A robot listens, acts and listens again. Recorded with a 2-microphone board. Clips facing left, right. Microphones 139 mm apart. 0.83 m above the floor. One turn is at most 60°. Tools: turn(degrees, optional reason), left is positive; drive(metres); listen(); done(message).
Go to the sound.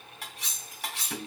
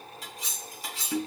turn(degrees=60)
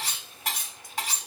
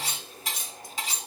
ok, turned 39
turn(degrees=60, reason="So it is at 60° left.")
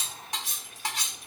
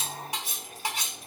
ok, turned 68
turn(degrees=-10, reason="The cutlery clinking is now 10° right.")
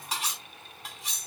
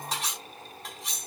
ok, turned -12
drive(metres=1.0)
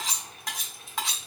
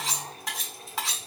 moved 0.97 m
drive(metres=1.0)
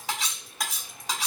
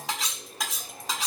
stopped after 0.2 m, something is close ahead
done("I am next to the cutlery clinking.")